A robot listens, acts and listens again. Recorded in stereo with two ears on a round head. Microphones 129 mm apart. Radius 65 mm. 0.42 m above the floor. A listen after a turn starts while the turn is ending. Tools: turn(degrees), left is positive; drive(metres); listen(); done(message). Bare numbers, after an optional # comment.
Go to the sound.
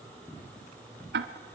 turn(-90)
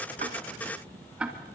drive(1.0)
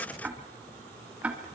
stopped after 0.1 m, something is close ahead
# The ticking is now 10° right.
turn(-10)
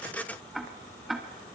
done("Something is in my way. I am facing the ticking but have not reached it.")